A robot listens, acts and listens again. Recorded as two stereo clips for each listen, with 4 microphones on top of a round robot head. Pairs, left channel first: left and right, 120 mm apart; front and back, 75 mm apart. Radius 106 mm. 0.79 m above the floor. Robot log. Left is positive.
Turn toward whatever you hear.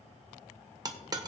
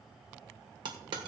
note: The dropped coin: 150° right.
cmd yaw -150
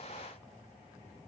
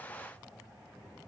end: Facing where the dropped coin came from. I can't hear it now.